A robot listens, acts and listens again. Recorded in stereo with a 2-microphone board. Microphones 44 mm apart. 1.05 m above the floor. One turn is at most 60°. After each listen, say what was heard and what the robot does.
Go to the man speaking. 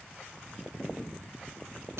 Keep listening.
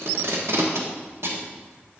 Keep listening.
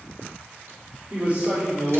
The man speaking: about 35° right or 145° right. Turn 35° right.
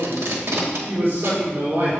So it is at 105° right. Turn 60° right.
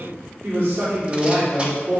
The man speaking is now 60° right. Turn 60° right.
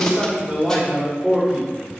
The man speaking is now 20° right. Turn 20° right.
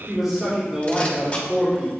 Drive 1.0 m forward.
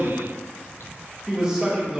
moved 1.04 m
The man speaking is now 20° right. Turn 20° right.
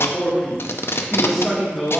Drive 1.0 m forward.
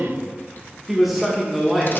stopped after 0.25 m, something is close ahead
Arrived at the man speaking, straight ahead.